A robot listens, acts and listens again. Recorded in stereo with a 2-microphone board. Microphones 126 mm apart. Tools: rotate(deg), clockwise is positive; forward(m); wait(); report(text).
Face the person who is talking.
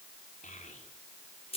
rotate(-90)
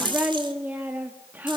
rotate(15)
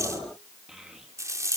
report("Found it: a child speaking, straight ahead.")